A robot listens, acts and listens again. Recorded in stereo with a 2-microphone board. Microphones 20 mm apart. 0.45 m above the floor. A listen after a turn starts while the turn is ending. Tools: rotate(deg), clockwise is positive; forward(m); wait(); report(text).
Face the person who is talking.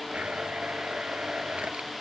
wait()
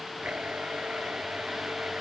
wait()
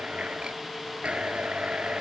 report("I can't make out anyone speaking to turn to.")